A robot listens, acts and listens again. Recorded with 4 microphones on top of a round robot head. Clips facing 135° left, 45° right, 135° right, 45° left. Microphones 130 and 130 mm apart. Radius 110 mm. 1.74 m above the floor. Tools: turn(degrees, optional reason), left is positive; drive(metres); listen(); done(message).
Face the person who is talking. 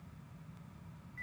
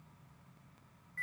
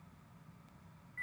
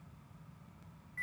listen()
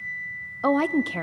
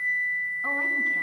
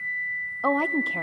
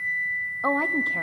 turn(degrees=150, reason="The woman speaking: 150° left.")
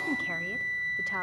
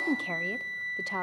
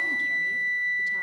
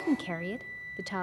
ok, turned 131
turn(degrees=20, reason="Nothing new. It was at 20° left.")
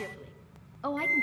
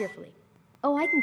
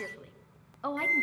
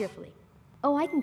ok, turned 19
done("Found it: a woman speaking, straight ahead.")